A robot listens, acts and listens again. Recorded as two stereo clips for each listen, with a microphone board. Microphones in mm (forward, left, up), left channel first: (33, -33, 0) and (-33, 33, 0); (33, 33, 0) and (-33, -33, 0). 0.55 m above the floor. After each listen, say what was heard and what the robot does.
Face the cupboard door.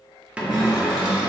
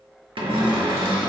The cupboard door: 150° right. Turn 150° right.
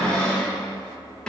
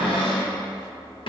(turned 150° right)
The cupboard door is now 35° left. Turn 35° left.
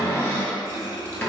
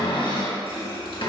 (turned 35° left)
The cupboard door is now 15° left. Turn 15° left.
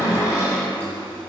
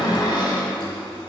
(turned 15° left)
Facing the cupboard door, under 1 m away.